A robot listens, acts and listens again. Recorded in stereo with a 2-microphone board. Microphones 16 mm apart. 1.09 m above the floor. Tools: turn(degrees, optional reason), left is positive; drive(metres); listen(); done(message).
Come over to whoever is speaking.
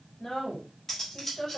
turn(degrees=65, reason="The woman speaking: about 65° left or 115° left.")
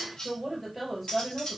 drive(metres=1.0)
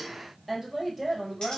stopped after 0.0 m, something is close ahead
turn(degrees=-10, reason="The woman speaking is now 10° right.")
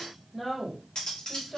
done("Blocked. The woman speaking is further on, straight ahead.")